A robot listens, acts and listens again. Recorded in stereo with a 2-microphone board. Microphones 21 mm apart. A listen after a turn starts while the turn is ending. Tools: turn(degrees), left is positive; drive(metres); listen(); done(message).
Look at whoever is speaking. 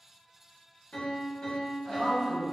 turn(degrees=-65)
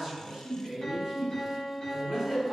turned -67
turn(degrees=-30)
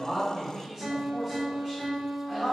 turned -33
done("Found it: a man speaking, straight ahead.")